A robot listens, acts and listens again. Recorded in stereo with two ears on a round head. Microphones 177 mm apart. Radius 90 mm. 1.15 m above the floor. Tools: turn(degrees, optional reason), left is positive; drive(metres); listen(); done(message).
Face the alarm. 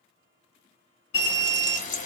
turn(degrees=60, reason="The alarm: about 60° left or 120° left.")
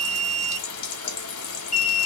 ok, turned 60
turn(degrees=45, reason="So it is at 45° left.")
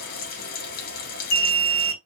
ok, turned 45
turn(degrees=15, reason="The alarm is now 15° left.")
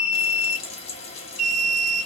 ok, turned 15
done("Facing the alarm.")